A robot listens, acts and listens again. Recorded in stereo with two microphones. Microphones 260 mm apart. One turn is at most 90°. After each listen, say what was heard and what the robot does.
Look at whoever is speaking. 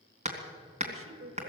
The woman speaking: about 55° right or 125° right. Turn 55° right.
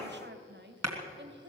So it is at 50° right. Turn 50° right.
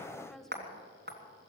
Found it: a woman speaking, straight ahead.